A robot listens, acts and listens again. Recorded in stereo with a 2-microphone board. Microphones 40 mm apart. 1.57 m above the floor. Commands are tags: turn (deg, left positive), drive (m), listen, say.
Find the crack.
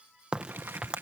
<turn deg="-25"/>
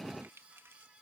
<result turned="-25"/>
<listen/>
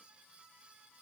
<say>I heard a crack, but can't make it out now. It was about straight ahead or 130° right.</say>